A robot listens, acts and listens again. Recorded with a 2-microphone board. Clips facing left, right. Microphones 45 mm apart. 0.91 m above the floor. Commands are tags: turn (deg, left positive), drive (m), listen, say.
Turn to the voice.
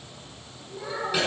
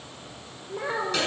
<turn deg="-40"/>
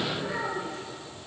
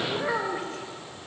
<turn deg="-105"/>
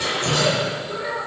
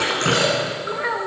<turn deg="-50"/>
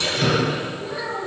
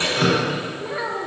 <turn deg="-25"/>
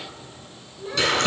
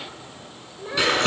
<turn deg="-15"/>
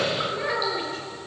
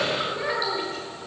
<say>Facing the child speaking, 2 to 4 m away.</say>